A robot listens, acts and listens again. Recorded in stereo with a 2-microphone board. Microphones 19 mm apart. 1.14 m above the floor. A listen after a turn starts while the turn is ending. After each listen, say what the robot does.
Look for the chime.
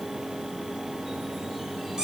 Keep listening.
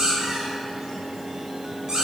Keep listening.
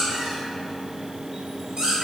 I can't make out a chime, only a squeak.